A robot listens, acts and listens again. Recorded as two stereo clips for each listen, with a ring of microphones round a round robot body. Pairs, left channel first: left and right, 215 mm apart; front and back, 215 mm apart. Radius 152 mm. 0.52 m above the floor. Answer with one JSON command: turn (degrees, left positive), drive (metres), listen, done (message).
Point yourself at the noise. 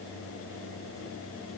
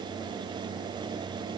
{"listen": true}
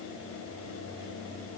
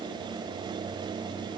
{"listen": true}
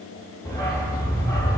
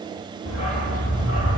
{"turn": 15}
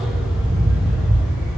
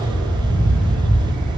{"done": "Facing the dog barking."}